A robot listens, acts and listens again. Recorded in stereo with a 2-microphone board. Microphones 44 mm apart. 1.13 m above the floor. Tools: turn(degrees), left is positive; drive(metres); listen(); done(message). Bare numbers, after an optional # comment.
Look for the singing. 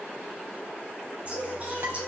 # The singing: about 30° right or 150° right.
turn(-30)
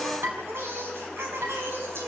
# So it is at 110° right.
turn(-110)
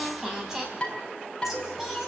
done("Facing the singing.")